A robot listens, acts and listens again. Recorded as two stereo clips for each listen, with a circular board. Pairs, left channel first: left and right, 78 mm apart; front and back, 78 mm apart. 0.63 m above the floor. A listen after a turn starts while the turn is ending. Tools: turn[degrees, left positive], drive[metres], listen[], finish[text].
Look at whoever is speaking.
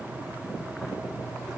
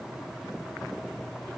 Action: listen[]
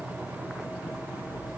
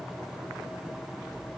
Action: listen[]
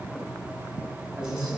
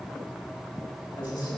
Thought: The man speaking: 10° right.
Action: turn[-10]
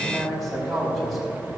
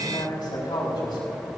Action: finish[Found it: a man speaking, straight ahead, over 4 m away.]